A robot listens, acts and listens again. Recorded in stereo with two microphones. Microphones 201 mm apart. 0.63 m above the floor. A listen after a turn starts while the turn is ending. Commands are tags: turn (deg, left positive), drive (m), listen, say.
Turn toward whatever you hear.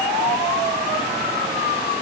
<listen/>
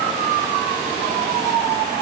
<listen/>
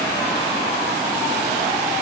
<say>I can't make out anything to turn to.</say>